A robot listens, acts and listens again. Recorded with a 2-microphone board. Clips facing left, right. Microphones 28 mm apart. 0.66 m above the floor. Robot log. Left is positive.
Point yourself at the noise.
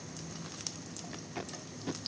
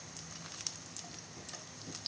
note: The tape being pulled: about 70° left or 110° left.
cmd yaw +70
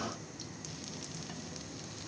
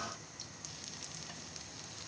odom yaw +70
cmd idle
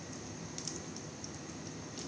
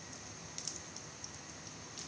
cmd idle
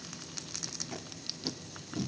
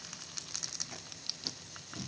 note: So it is at 10° left.
cmd yaw +10
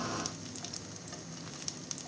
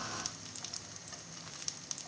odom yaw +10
cmd idle
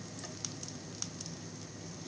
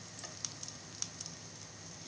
cmd idle
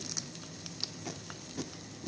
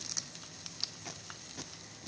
end: Found it: tape being pulled, straight ahead.